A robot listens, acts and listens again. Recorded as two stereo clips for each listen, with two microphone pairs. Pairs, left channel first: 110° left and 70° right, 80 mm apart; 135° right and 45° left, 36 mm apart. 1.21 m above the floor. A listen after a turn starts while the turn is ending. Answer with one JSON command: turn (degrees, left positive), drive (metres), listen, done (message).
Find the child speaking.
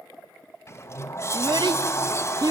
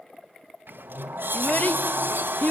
{"turn": -95}
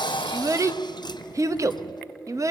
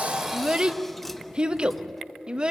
{"turn": -20}
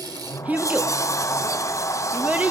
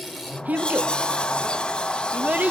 {"done": "Facing the child speaking, under 1 m away."}